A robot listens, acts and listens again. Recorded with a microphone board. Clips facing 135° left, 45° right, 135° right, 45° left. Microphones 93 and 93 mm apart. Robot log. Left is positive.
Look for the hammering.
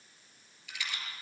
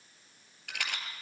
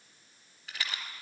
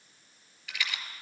cmd idle
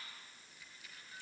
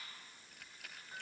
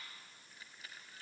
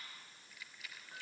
cmd idle
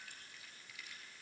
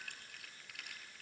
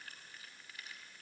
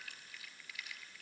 end: I can't make out hammering to turn to.